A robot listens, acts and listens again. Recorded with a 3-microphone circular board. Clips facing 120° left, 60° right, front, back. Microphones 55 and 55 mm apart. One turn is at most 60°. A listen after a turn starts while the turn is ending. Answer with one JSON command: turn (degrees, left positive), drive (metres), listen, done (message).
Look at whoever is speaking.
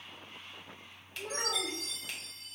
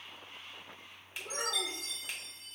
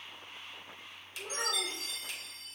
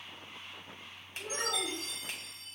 {"turn": 60}
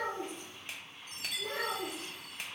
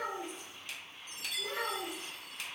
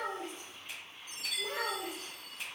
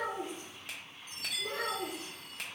{"turn": 30}
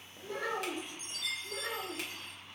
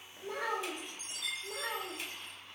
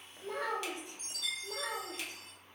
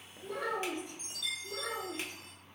{"turn": -25}
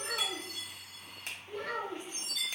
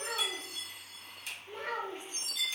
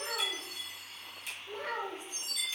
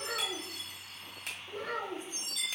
{"done": "Facing the child speaking."}